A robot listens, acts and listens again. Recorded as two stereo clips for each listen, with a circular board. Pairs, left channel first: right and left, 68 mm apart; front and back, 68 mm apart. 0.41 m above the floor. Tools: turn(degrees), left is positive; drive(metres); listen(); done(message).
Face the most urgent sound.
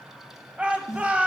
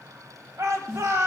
turn(degrees=155)
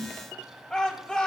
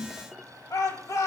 turn(degrees=-15)
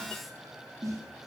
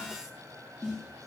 listen()
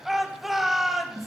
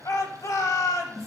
done("Facing the shout, 1 to 2 m away.")